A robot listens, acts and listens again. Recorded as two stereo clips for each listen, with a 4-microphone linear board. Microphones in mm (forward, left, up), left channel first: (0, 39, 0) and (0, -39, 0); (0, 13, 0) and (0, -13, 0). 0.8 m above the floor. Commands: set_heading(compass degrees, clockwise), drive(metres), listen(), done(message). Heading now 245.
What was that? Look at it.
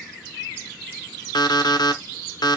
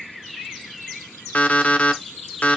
set_heading(180)
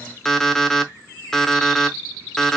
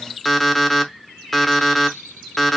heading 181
done("Found it: an alarm clock, straight ahead.")